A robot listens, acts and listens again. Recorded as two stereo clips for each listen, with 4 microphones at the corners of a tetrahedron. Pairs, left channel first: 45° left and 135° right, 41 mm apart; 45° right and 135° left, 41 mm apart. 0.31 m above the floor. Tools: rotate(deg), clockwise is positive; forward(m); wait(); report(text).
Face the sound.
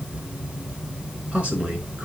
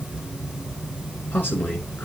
rotate(85)
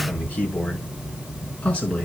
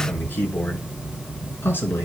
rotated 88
rotate(20)
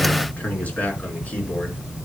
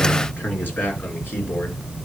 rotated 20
rotate(10)
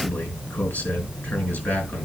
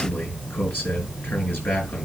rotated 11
report("Facing the man speaking.")